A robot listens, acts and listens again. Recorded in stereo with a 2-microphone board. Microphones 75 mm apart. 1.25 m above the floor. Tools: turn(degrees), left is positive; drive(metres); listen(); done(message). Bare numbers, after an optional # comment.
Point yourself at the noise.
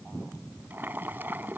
# The boiling: about 25° right or 155° right.
turn(-25)
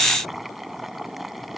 done("Facing the boiling.")